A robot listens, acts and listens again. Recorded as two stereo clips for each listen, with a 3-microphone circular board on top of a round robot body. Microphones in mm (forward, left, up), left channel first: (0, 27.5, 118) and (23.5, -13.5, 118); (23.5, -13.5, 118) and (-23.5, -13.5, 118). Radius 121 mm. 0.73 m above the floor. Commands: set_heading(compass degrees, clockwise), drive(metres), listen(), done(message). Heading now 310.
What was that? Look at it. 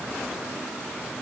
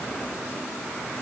listen()
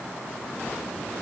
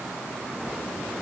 listen()
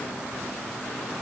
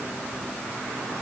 done("I can't make out anything to turn to.")